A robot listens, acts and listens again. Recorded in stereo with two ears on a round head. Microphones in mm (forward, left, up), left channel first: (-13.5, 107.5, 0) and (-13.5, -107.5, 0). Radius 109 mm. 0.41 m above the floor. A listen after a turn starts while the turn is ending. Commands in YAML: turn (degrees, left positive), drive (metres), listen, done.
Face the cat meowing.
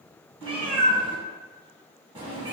turn: -20
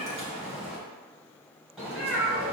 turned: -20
done: "Found it: a cat meowing, straight ahead."